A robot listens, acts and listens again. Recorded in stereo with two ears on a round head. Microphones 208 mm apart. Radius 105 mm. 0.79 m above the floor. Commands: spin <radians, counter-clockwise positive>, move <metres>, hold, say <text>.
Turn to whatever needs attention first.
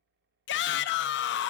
spin 0.87
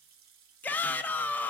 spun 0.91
spin 0.17
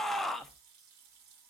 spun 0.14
say Found it: a shout, straight ahead, under 1 m away.